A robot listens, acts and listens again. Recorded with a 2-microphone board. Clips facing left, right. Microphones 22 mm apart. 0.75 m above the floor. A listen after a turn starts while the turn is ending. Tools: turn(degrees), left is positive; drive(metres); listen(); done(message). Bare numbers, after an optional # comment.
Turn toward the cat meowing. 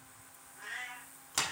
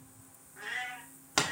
# The cat meowing: about 40° right or 140° right.
turn(-40)
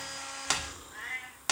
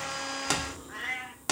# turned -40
# So it is at 110° right.
turn(-110)
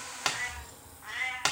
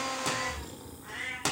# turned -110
# The cat meowing is now 30° left.
turn(30)
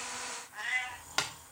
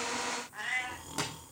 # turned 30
# The cat meowing is now 10° left.
turn(10)
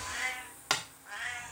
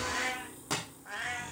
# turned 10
done("Found it: a cat meowing, straight ahead, 1 to 2 m away.")